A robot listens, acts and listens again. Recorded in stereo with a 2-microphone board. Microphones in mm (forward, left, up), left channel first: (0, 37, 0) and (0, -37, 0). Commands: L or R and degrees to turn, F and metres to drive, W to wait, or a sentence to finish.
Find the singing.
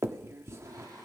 R55
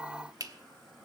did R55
Found it: singing, straight ahead, over 4 m away.